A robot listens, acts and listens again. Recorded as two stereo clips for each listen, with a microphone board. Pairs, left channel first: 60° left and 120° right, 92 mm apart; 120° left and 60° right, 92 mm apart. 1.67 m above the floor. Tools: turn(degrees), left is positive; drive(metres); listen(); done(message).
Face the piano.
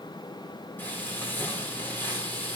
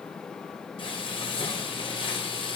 listen()
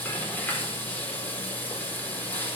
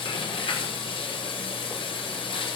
listen()
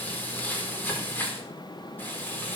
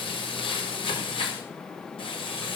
done("I can't make out a piano, only frying.")